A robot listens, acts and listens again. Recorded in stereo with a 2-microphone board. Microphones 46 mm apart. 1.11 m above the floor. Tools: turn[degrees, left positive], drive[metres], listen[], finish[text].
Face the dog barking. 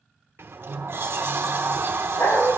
Action: turn[90]
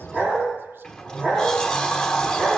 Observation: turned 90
Action: finish[Found it: a dog barking, straight ahead, over 4 m away.]